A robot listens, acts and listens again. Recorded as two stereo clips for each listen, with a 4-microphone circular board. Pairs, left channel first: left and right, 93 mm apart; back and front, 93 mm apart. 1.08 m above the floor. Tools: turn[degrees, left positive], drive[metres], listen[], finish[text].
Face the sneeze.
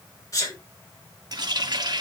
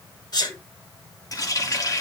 Thought: The sneeze: 140° left.
Action: turn[140]
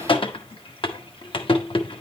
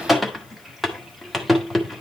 Action: finish[I heard a sneeze from this way, but can't make it out now.]